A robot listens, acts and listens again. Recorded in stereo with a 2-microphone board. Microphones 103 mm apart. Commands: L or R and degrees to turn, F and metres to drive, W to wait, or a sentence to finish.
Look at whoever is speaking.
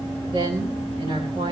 R65
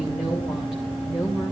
Found it: a woman speaking, straight ahead.